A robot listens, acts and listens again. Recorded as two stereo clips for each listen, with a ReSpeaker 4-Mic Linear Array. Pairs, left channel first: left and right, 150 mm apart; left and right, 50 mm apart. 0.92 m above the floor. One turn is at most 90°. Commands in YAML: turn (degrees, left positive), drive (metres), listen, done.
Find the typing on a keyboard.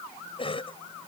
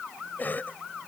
listen: true
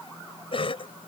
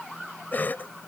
listen: true
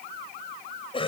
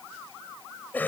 done: "I can't make out typing on a keyboard, only a cough."